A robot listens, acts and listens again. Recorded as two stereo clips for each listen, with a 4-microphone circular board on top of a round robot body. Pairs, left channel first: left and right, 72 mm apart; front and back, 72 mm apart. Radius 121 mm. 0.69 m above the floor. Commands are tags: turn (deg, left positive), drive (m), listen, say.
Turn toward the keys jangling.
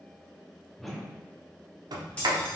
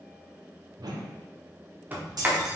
<turn deg="165"/>
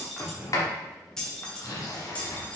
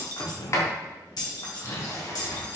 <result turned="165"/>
<turn deg="25"/>
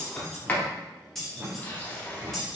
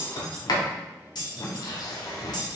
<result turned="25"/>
<say>Facing the keys jangling, 1 to 2 m away.</say>